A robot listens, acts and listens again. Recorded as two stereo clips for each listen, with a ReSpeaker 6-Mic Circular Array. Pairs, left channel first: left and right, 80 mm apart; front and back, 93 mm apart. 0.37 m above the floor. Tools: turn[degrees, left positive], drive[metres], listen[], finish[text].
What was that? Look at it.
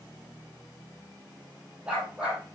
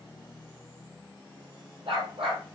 Thought: The dog barking: 170° right.
Action: turn[-170]
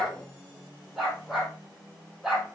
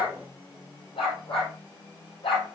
Action: finish[Facing the dog barking.]